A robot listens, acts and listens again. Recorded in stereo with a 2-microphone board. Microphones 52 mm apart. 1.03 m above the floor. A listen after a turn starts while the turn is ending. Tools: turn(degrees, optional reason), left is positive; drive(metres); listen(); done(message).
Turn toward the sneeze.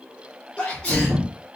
turn(degrees=20, reason="The sneeze: about 20° left or 160° left.")
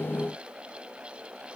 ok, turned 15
listen()
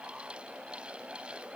done("I heard a sneeze, but can't make it out now. It was about 5° left or 145° left.")